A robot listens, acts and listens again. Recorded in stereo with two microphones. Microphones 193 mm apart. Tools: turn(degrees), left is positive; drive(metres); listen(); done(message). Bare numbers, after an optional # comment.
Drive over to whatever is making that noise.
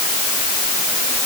listen()
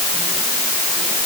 listen()
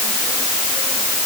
done("I can't make out anything.")